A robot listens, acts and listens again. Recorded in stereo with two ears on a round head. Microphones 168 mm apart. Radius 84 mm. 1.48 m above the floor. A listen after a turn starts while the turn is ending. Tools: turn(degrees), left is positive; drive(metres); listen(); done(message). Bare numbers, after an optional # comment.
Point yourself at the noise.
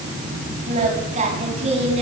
# The singing: about 30° right or 150° right.
turn(-30)
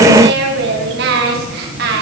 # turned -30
# So it is at 125° right.
turn(-125)
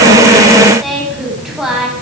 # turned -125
done("Found it: singing, straight ahead, over 4 m away.")